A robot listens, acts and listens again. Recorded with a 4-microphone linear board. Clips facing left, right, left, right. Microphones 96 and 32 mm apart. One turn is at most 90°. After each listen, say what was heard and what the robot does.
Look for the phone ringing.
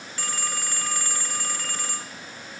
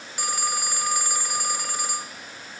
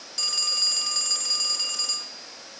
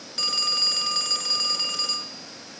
The phone ringing: about 15° right or 165° right. Turn 15° right.
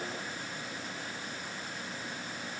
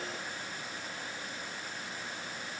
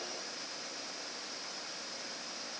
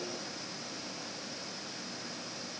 Keep listening.
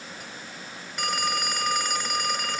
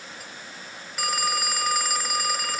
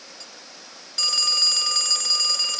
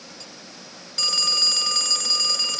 Found it: a phone ringing, straight ahead.